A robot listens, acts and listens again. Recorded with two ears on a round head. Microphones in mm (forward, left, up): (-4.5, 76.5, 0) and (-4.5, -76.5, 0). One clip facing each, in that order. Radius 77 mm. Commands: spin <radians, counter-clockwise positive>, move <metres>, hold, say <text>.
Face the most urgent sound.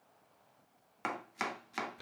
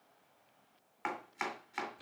hold
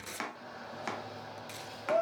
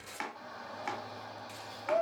spin 0.61
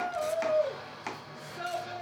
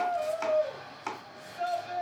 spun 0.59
spin 1.92
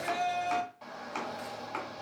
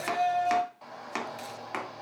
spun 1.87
say Facing the shout, 1 to 2 m away.